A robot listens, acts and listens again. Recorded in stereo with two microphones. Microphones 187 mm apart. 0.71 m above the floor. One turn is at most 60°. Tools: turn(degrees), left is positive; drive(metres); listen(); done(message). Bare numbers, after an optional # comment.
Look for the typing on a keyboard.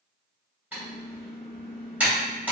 turn(-30)
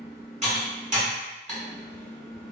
# So it is at 140° right.
turn(-60)
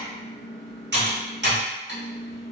# The typing on a keyboard is now 70° right.
turn(-60)
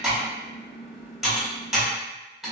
done("Found it: typing on a keyboard, straight ahead.")